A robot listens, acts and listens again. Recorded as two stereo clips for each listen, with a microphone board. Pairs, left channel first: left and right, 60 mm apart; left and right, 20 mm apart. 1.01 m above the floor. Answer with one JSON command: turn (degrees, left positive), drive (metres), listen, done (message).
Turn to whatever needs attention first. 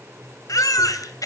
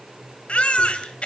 {"turn": 90}
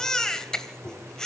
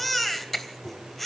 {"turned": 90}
{"turn": 10}
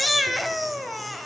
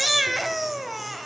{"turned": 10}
{"done": "Found it: a baby crying, straight ahead, 2 to 4 m away."}